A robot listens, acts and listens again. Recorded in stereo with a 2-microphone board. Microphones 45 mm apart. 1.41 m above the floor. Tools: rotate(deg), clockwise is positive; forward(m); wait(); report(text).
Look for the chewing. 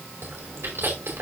rotate(70)
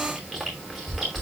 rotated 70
report("Facing the chewing, over 4 m away.")